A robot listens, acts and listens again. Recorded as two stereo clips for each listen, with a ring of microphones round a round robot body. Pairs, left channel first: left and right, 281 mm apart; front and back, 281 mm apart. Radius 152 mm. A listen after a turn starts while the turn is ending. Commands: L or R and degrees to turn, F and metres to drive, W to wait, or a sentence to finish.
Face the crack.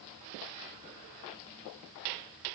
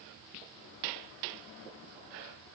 W
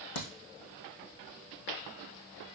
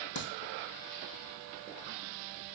L50
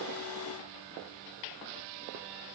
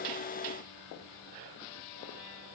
Facing where the crack came from. I can't hear it now.